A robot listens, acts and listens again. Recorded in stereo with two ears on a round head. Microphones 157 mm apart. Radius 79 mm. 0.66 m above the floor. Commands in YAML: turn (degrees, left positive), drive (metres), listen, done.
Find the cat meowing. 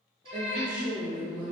turn: -35
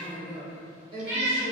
turn: -110
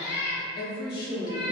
turn: 70
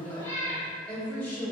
turn: 20
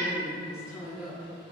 listen: true
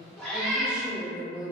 done: "Found it: a cat meowing, straight ahead."